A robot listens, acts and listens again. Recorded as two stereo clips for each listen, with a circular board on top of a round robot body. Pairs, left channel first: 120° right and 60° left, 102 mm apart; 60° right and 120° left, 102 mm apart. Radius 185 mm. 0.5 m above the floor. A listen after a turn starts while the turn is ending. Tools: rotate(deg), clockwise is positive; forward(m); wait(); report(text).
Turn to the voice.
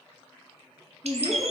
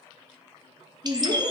rotate(-125)
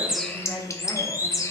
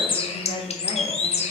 rotate(50)
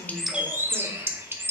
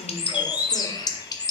wait()
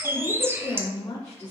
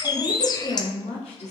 rotate(50)
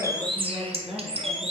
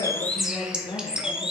report("Found it: a woman speaking, straight ahead, 2 to 4 m away.")